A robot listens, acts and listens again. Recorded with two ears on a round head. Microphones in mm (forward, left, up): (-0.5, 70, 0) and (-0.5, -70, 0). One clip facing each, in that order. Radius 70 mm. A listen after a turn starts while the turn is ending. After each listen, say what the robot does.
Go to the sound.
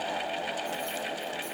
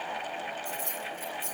Turn 40° right.
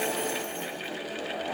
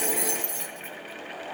Turn 100° right.
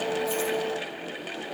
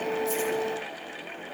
Keep listening.
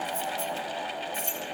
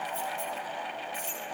Turn 10° left.
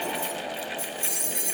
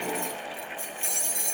Drive 1.0 m forward.
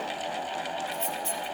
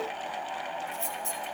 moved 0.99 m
Drive 1.0 m forward.
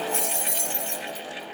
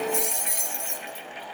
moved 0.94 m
Turn 15° right.
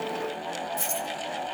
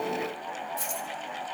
Drive 1.0 m forward.
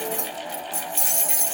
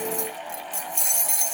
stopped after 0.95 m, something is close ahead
I am next to the keys jangling.